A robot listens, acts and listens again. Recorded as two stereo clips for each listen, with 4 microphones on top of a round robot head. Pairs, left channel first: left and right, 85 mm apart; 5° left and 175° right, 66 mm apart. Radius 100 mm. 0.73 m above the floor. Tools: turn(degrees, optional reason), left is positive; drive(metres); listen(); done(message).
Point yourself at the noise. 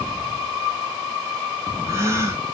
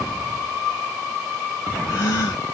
turn(degrees=-30, reason="The gasp: 30° right.")
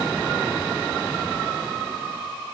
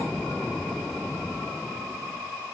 done("I heard a gasp from this way, but can't make it out now.")